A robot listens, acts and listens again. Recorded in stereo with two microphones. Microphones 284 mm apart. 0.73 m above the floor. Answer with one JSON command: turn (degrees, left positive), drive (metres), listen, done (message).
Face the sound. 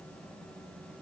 {"listen": true}
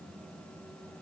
{"listen": true}
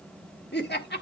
{"turn": 35}
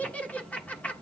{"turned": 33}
{"done": "Facing the laughter, 1 to 2 m away."}